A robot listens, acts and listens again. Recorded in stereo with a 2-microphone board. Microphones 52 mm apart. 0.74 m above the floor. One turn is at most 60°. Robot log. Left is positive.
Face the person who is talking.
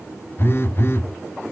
cmd idle
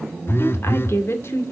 note: The woman speaking: about 50° left or 130° left.
cmd yaw +50
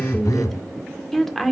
end: Facing the woman speaking, 2 to 4 m away.